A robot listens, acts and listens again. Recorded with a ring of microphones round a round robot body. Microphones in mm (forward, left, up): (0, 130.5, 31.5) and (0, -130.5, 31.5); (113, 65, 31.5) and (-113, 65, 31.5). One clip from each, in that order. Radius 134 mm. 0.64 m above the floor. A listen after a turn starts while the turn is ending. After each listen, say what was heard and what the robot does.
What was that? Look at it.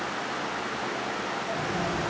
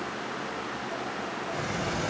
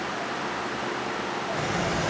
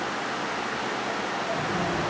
The sliding door: 25° right. Turn 25° right.
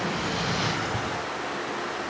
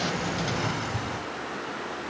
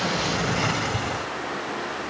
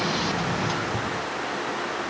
Found it: a sliding door, straight ahead, 1 to 2 m away.